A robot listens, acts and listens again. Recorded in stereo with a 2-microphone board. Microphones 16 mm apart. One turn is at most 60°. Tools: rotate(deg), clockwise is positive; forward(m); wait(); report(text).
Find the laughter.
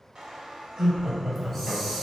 rotate(40)
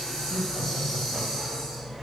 rotate(60)
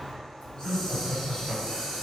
rotate(35)
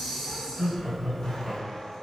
report("Found it: laughter, straight ahead.")